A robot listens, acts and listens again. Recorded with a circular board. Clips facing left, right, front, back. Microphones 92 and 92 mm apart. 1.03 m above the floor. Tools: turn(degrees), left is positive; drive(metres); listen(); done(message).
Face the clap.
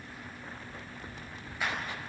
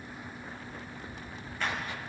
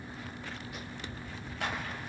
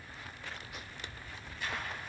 turn(degrees=10)
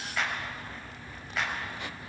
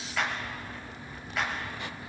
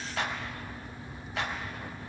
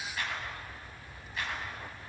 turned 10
done("Found it: a clap, straight ahead.")